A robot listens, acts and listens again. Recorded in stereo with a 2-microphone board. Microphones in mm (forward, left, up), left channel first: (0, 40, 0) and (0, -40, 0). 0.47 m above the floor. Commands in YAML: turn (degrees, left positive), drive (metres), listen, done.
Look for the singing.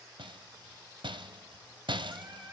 turn: -25
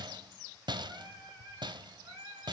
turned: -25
turn: -125
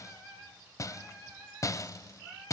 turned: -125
turn: -10
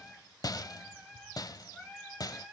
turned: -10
done: "Facing the singing, over 4 m away."